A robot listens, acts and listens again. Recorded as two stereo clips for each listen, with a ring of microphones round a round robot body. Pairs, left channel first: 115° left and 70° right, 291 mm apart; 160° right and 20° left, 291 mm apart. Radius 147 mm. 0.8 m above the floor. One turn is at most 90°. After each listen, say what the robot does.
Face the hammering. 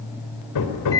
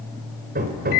Turn 85° left.
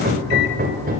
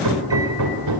Facing the hammering.